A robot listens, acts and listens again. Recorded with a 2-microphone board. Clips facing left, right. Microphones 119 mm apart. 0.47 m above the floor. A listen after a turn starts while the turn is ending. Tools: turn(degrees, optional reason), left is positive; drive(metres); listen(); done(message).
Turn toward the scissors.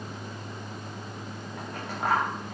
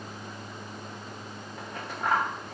turn(degrees=70, reason="The scissors: about 70° left or 110° left.")
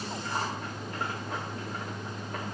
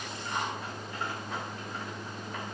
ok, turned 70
listen()
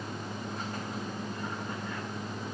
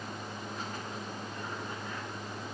listen()
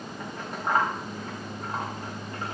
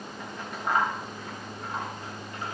turn(degrees=40, reason="So it is at 40° left.")
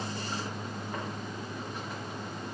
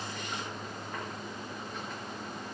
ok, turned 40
listen()
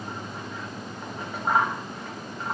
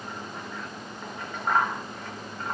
turn(degrees=10, reason="The scissors is now 10° left.")
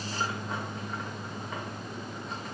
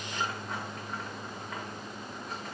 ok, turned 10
listen()
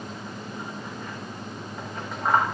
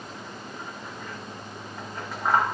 done("Facing the scissors, over 4 m away.")